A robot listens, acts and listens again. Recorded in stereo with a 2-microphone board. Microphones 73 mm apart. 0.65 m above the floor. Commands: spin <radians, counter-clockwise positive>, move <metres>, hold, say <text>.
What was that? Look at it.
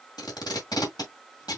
spin 1.57
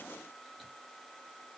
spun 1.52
hold
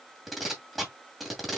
say Found it: tape being pulled, straight ahead.